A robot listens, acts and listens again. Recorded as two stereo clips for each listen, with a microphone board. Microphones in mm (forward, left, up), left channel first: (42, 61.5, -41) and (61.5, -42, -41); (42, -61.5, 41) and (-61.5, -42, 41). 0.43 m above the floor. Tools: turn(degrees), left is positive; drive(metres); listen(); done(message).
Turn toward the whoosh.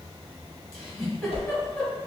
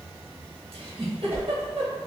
turn(degrees=100)
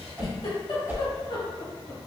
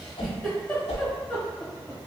turn(degrees=-10)
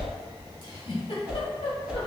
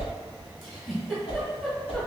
done("Facing the whoosh.")